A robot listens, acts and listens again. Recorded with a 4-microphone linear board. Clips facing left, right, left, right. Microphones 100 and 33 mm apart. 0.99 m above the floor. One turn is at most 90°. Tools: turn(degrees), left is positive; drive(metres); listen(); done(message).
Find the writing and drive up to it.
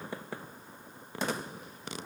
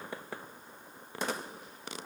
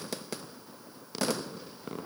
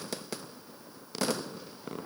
listen()
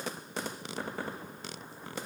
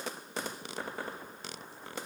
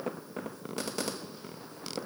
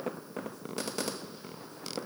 listen()
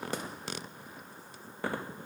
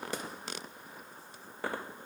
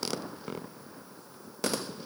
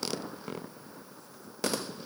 done("I can't make out writing to turn to.")